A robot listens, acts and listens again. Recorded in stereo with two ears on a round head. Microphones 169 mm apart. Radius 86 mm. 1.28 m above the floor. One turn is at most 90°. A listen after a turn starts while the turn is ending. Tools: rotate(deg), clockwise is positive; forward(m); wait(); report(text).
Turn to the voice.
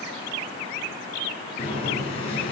wait()
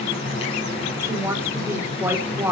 rotate(30)
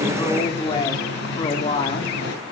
rotate(-25)
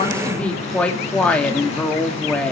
report("Facing the woman speaking.")